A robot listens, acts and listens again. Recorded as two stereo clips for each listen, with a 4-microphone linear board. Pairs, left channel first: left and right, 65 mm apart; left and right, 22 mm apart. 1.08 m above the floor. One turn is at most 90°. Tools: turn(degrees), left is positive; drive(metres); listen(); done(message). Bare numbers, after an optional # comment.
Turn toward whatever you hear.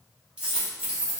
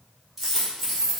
# The dropped coin: about 15° right or 165° right.
turn(-15)
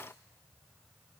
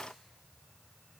listen()
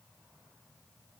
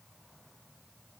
done("I heard a dropped coin, but can't make it out now. It was about straight ahead or 150° right.")